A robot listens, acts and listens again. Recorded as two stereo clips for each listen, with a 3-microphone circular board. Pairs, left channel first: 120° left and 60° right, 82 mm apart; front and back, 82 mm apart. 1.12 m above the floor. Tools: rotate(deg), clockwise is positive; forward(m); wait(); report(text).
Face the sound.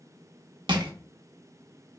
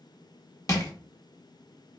rotate(50)
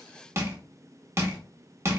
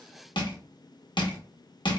report("Facing the crushing.")